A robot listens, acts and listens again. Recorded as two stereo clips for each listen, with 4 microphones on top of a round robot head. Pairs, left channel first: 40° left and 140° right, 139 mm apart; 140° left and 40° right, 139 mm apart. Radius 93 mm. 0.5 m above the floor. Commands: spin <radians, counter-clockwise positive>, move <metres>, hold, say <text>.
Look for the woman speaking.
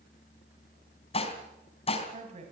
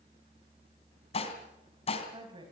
spin -1.66
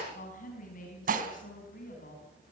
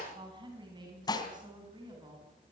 spin 0.35
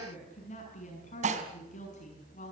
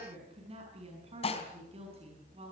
say Facing the woman speaking.